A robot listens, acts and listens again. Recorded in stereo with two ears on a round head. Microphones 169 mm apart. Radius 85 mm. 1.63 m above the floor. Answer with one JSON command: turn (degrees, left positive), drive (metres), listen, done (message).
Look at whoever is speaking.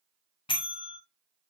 {"listen": true}
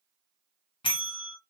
{"listen": true}
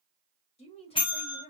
{"turn": 25}
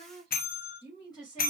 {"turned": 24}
{"turn": 20}
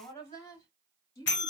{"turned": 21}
{"turn": 30}
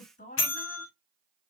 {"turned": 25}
{"turn": 130}
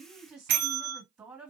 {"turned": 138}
{"turn": -10}
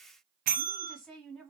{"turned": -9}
{"done": "Facing the woman speaking."}